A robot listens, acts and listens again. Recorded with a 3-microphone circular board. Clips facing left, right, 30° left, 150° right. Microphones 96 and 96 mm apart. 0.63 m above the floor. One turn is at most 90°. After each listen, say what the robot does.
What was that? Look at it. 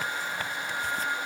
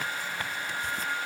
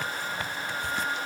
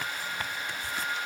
Keep listening.
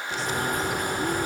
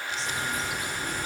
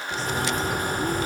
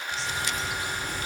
Turn 65° left.
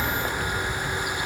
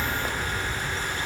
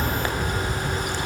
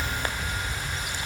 Turn 15° left.
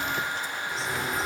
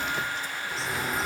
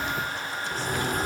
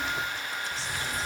Facing the bird, 1 to 2 m away.